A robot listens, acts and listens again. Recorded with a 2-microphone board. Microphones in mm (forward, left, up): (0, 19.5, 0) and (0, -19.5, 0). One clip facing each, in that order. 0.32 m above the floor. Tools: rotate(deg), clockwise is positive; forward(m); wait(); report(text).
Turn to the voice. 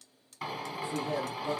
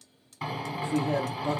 rotate(50)
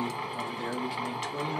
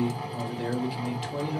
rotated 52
rotate(10)
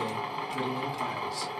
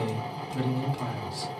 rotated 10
report("Found it: a man speaking, straight ahead.")